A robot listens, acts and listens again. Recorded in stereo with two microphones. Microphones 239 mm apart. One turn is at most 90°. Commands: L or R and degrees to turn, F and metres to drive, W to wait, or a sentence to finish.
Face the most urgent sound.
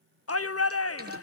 L75
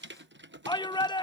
L20
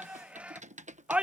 Found it: a shout, straight ahead.